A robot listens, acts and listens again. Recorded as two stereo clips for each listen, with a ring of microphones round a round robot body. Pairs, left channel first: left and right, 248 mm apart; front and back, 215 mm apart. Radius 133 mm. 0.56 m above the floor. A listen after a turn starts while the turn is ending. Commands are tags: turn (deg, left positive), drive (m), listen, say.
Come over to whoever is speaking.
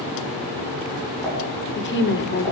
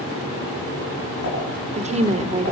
<turn deg="125"/>
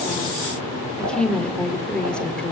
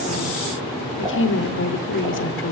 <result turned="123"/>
<drive m="1.0"/>
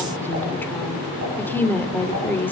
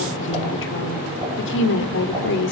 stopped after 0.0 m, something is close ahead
<turn deg="10"/>
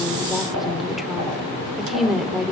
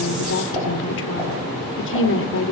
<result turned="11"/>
<say>Blocked. The woman speaking is further on, straight ahead.</say>